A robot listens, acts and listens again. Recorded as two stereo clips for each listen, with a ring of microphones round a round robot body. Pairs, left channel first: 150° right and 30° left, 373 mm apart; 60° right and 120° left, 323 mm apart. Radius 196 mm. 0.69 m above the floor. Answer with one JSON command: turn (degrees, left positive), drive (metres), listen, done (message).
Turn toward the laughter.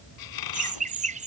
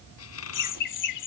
{"turn": -40}
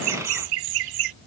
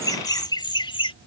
{"turn": 15}
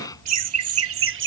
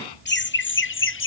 {"turn": -20}
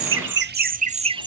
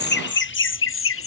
{"turn": -45}
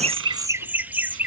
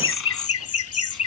{"turn": -55}
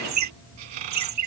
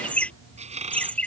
{"turn": 25}
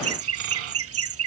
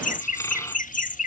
{"done": "Found it: laughter, straight ahead."}